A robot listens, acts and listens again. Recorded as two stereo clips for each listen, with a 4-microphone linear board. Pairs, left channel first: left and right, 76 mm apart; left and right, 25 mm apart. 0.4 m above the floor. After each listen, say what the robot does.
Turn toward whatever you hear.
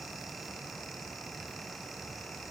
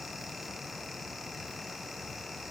Keep listening.
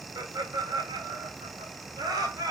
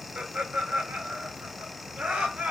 Turn 60° right.
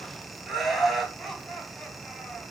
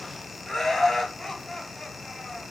Facing the laughter, 2 to 4 m away.